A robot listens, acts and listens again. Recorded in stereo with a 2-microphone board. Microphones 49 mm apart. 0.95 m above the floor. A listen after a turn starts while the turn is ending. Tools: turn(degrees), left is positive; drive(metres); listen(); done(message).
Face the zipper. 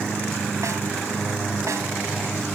listen()
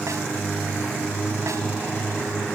listen()
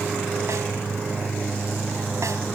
done("I can't make out a zipper to turn to.")